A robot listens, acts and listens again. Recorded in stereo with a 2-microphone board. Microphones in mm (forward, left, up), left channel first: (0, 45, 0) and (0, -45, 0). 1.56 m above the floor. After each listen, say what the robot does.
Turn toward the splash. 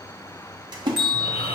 Turn 55° right.
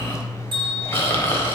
Keep listening.
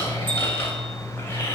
I heard a splash, but can't make it out now. It was about straight ahead or 70° right.